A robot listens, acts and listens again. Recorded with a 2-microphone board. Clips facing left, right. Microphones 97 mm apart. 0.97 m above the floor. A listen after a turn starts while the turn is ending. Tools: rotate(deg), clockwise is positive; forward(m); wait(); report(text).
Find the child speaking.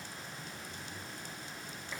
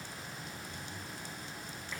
wait()
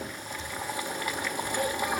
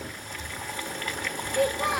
rotate(90)
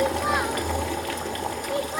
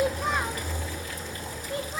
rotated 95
rotate(-20)
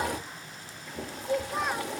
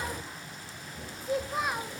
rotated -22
report("Facing the child speaking, under 1 m away.")